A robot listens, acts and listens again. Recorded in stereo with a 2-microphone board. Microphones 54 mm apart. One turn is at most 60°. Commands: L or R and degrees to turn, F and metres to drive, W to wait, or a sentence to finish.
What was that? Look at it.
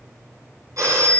R60
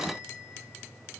W
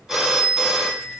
R10
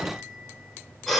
Facing the phone ringing.